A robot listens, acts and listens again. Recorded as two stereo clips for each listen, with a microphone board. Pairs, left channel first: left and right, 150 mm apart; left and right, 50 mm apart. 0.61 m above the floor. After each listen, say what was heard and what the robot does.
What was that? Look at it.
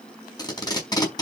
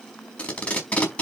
The tape being pulled: about 25° left or 155° left. Turn 25° left.
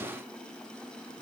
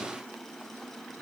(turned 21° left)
Keep listening.
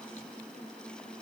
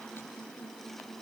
Keep listening.
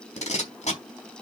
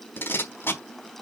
So it is at 130° left. Turn 130° left.
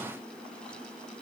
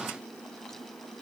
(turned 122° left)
Nothing new. It was at 10° left. Turn 10° left.
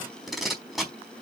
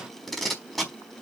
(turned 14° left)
Facing the tape being pulled.